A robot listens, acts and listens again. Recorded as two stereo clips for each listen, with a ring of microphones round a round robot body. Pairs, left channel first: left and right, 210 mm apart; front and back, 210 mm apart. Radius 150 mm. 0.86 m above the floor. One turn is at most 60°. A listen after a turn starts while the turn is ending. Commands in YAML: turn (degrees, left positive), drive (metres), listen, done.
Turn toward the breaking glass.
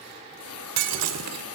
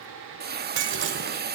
turn: -60
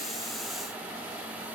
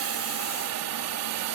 turn: -60
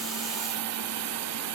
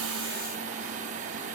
done: "Facing where the breaking glass came from. I can't hear it now."